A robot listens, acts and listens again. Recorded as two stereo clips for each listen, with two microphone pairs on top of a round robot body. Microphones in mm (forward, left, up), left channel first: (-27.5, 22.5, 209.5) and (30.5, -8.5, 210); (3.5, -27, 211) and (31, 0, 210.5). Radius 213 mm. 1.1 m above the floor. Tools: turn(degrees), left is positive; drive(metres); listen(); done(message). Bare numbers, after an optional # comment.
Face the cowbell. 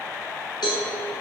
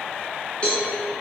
# The cowbell: 160° left.
turn(160)
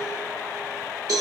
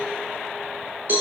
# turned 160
done("Found it: a cowbell, straight ahead.")